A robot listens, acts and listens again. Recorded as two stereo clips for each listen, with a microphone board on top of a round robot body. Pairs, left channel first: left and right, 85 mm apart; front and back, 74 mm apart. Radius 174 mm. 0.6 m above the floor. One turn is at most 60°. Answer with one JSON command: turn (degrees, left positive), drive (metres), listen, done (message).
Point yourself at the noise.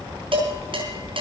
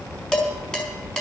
{"turn": -60}
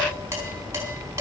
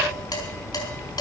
{"turn": -30}
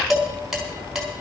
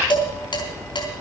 {"done": "Found it: dishes clattering, straight ahead, over 4 m away."}